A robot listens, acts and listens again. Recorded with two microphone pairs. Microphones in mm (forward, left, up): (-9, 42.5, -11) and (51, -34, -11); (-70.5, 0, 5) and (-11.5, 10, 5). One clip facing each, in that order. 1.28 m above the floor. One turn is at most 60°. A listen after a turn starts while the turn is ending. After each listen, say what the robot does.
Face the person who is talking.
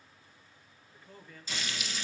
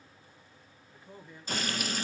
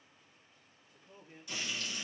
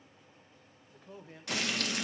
Turn 20° left.
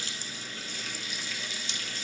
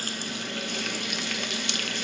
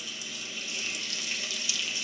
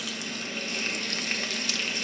Keep listening.
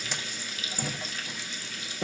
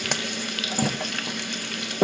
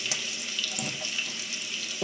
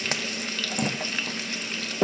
Keep listening.
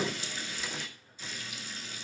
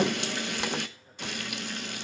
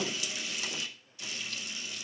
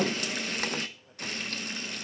Facing where the man speaking came from. I can't hear it now.